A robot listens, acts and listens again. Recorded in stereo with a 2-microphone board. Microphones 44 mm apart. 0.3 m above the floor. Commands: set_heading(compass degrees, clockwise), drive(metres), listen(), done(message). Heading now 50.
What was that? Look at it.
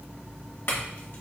set_heading(350)
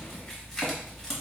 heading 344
set_heading(334)
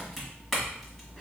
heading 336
done("Found it: a clink, straight ahead.")